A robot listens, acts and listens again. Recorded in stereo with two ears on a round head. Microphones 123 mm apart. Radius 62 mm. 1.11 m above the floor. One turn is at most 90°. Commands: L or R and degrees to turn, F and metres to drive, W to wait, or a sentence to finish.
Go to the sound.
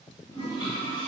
L40
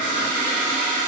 L90
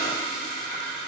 L25
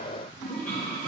F1.0
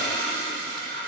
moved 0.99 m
L15
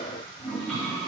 F1.0
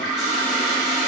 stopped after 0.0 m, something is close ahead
Arrived at the toilet flushing, straight ahead.